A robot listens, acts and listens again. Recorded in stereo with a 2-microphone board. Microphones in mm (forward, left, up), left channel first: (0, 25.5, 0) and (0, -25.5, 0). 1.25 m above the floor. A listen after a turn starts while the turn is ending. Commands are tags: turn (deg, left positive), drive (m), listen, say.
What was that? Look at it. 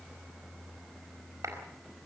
<turn deg="-90"/>
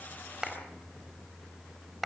<say>Found it: a clap, straight ahead.</say>